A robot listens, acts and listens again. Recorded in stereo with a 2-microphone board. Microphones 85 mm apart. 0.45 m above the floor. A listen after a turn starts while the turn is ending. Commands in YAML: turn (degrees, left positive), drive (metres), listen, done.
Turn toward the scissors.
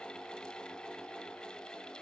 listen: true
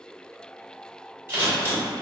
turn: -30
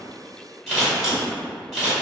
done: "Found it: scissors, straight ahead."